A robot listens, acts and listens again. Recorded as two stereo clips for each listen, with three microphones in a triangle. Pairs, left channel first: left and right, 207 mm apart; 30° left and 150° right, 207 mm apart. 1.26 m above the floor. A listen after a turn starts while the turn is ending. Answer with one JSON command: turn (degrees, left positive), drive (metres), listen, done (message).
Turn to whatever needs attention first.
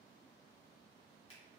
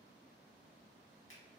{"listen": true}
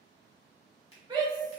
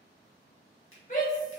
{"turn": -20}
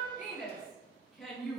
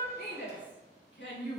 {"done": "Facing the shout, 1 to 2 m away."}